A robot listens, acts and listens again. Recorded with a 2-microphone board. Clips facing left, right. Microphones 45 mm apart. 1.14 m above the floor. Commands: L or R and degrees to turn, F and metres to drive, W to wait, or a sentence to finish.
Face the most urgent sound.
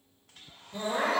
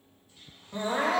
R45
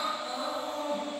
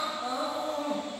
R90
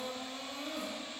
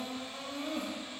R50
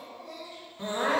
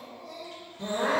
L25
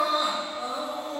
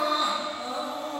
L15
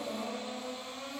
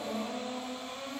Found it: crying, straight ahead, 1 to 2 m away.